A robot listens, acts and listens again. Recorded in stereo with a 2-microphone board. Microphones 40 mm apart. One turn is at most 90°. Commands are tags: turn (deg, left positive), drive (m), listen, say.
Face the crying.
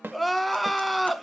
<turn deg="30"/>
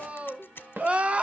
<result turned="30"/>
<turn deg="-30"/>
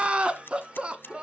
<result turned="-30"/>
<turn deg="-25"/>
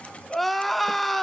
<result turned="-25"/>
<say>Found it: crying, straight ahead, under 1 m away.</say>